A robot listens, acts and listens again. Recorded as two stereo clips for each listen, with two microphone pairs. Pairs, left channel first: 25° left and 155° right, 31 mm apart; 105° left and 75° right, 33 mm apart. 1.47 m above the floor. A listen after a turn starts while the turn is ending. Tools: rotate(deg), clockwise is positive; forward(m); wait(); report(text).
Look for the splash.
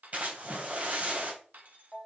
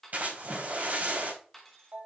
rotate(110)
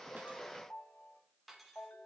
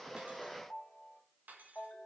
report("Facing where the splash came from. I can't hear it now.")